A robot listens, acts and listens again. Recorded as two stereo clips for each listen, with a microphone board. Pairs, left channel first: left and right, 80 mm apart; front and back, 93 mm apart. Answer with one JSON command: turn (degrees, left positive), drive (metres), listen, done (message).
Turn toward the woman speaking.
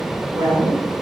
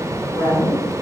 {"turn": -75}
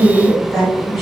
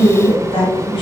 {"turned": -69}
{"done": "Facing the woman speaking."}